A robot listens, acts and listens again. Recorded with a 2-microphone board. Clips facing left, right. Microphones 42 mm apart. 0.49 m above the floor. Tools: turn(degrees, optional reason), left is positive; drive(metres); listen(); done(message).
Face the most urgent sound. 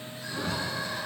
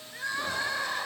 turn(degrees=-55, reason="The crying: about 55° right or 125° right.")
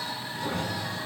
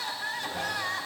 turn(degrees=-70, reason="So it is at 70° right.")
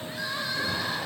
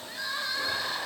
done("Facing the crying.")